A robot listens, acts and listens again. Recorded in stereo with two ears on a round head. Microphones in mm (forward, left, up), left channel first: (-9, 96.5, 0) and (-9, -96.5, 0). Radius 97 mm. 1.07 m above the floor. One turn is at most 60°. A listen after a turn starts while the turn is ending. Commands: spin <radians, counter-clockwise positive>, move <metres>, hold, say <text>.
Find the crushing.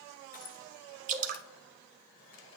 spin 0.70
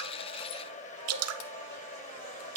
hold
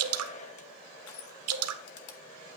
spin 1.05
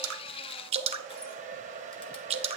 spin 0.70
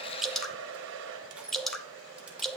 say Facing the crushing, 1 to 2 m away.